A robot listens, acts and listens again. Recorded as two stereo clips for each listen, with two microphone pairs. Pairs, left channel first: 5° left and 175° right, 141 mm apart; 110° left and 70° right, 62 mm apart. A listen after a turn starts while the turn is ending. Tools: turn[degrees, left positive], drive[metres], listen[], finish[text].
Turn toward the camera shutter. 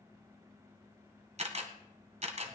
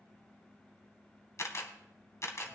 Thought: The camera shutter: 150° left.
Action: turn[150]
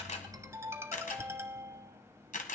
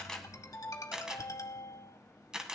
Thought: The camera shutter is now 10° left.
Action: turn[10]
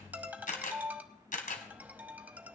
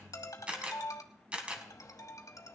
Action: finish[Found it: a camera shutter, straight ahead, 1 to 2 m away.]